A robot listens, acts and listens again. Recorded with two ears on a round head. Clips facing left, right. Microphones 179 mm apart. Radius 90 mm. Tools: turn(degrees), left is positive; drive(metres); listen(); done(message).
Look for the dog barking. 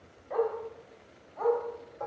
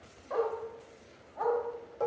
turn(degrees=-30)
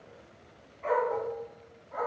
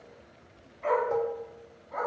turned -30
turn(degrees=-125)
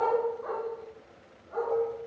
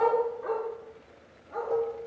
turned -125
turn(degrees=-25)
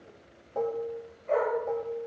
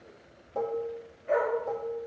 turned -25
turn(degrees=-15)
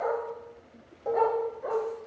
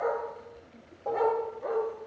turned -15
done("Found it: a dog barking, straight ahead, over 4 m away.")